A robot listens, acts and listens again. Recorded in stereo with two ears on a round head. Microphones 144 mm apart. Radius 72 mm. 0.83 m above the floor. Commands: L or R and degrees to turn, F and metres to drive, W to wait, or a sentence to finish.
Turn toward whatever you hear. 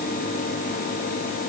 W
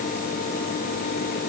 W
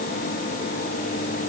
I can't make out anything to turn to.